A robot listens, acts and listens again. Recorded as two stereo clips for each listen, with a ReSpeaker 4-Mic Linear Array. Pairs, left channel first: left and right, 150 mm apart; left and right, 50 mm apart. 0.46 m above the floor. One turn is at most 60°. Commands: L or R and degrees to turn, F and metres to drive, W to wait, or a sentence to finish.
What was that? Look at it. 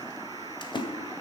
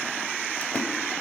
L30
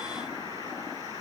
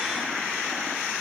W
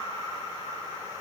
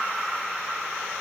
I heard a splash, but can't make it out now. It was about straight ahead or 120° left.